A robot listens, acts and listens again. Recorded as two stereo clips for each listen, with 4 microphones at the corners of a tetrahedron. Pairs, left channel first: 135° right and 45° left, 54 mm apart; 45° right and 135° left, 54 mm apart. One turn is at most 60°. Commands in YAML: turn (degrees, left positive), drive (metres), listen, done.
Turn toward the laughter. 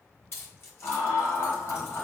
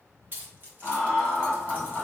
turn: -60
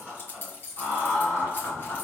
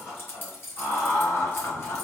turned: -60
turn: -60
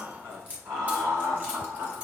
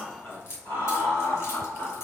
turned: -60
done: "Facing the laughter."